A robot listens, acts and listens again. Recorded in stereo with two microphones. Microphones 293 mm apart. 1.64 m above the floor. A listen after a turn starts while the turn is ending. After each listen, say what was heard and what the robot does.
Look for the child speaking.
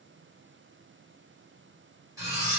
Keep listening.
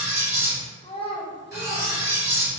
The child speaking: about 20° left or 160° left. Turn 20° left.
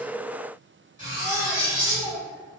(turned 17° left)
Found it: a child speaking, straight ahead, under 1 m away.